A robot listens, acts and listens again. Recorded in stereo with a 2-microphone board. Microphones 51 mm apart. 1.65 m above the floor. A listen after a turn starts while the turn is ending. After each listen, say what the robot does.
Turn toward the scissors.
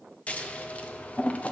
Turn 25° left.
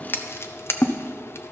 Turn 125° left.
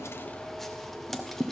Found it: scissors, straight ahead.